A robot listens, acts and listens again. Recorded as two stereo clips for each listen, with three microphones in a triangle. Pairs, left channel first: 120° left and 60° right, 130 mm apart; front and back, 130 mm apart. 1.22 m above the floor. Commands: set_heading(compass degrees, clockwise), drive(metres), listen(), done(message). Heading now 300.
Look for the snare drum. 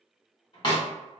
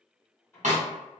set_heading(130)
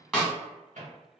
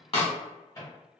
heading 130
set_heading(90)
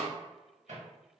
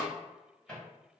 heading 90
listen()
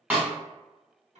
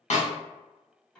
set_heading(70)
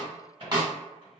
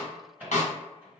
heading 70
done("Facing the snare drum, 1 to 2 m away.")